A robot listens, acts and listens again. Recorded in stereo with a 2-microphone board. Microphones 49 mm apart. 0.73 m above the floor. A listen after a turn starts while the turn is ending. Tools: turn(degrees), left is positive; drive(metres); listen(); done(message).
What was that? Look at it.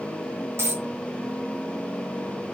turn(degrees=-60)
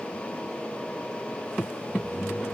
listen()
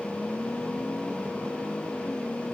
done("I heard a dropped coin, but can't make it out now. It was about straight ahead or 60° right.")